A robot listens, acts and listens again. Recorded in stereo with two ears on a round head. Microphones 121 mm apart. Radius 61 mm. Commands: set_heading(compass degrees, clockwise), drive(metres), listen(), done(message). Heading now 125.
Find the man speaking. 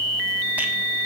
listen()
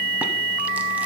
listen()
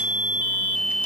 done("I can't make out a man speaking to turn to.")